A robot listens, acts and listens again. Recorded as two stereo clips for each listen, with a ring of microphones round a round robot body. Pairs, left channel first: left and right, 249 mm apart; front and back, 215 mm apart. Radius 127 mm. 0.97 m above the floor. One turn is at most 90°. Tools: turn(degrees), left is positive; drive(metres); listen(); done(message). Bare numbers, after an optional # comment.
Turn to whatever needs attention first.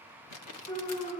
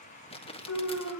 # The alarm: 25° left.
turn(25)
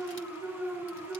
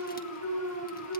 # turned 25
# The alarm is now 10° left.
turn(10)
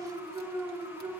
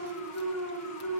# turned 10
done("Found it: an alarm, straight ahead, over 4 m away.")